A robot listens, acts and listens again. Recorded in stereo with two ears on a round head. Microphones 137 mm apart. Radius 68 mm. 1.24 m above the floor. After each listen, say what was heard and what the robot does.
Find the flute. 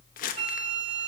The flute: about 50° right or 130° right. Turn 50° right.
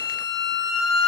Found it: a flute, straight ahead, 1 to 2 m away.